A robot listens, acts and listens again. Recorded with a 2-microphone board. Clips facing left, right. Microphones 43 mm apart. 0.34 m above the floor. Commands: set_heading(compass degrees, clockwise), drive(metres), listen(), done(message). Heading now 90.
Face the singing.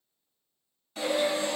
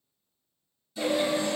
set_heading(120)
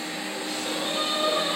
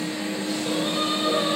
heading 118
listen()
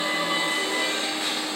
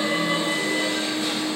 listen()
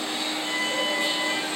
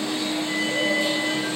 done("I heard singing, but can't make it out now. It was about 5° right or 120° right.")